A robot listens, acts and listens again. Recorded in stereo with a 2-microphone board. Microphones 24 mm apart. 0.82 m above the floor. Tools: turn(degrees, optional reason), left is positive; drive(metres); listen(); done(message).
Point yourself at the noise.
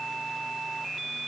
listen()
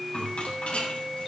turn(degrees=60, reason="The rattle: about 60° left or 120° left.")
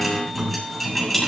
done("Found it: a rattle, straight ahead, over 4 m away.")